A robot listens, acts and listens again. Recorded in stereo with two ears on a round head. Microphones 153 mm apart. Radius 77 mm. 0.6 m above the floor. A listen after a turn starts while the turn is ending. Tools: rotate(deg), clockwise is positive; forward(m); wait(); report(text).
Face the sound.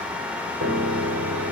rotate(90)
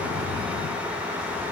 wait()
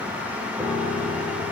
rotate(10)
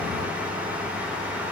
wait()
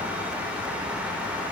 wait()
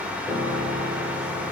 report("Found it: a piano, straight ahead.")